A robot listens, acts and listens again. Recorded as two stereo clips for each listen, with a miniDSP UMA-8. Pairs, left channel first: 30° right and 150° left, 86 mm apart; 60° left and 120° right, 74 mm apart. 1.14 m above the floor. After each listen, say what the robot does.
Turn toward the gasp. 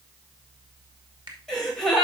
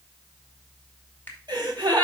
Turn 115° right.
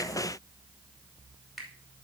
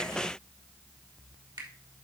I heard a gasp from this way, but can't make it out now.